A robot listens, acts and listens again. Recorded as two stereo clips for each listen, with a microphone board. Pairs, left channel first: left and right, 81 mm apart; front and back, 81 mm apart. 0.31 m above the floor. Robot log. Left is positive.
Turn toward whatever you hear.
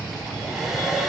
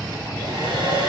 note: The hair dryer: straight behind.
cmd yaw +180
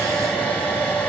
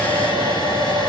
note: The hair dryer is now 20° left.
cmd yaw +20
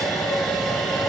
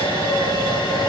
end: Facing the hair dryer, 2 to 4 m away.